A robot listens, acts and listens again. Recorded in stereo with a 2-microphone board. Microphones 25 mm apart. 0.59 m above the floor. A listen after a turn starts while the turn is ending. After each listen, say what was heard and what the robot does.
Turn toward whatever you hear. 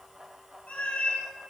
Turn 90° left.
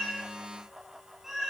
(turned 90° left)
So it is at 10° right. Turn 10° right.
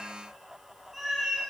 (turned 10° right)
Facing the cat meowing.